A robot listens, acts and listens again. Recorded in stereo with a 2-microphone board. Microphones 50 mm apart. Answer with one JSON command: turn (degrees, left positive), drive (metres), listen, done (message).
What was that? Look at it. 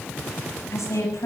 {"turn": 90}
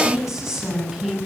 {"done": "Facing the woman speaking."}